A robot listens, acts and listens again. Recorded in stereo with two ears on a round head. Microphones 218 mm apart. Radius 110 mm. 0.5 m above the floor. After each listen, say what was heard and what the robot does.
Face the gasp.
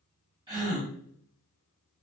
The gasp: about 15° right or 165° right. Turn 15° right.
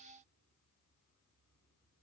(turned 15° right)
Keep listening.
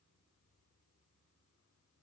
I heard a gasp, but can't make it out now. It was about straight ahead or 150° right.